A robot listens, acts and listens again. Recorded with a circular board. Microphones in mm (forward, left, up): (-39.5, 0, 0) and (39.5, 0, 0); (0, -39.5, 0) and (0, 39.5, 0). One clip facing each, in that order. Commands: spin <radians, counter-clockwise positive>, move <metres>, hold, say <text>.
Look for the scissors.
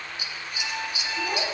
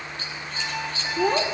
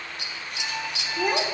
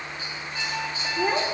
spin -1.75
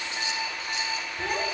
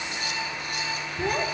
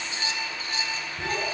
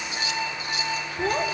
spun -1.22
spin -0.52
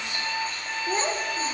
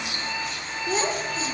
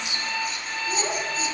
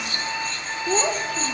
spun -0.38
spin -0.17
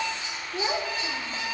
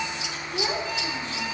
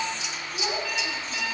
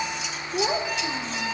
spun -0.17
hold
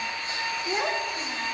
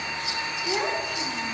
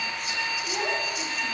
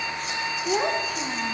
hold
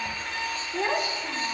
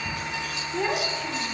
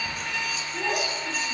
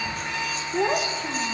say I heard scissors from this way, but can't make it out now.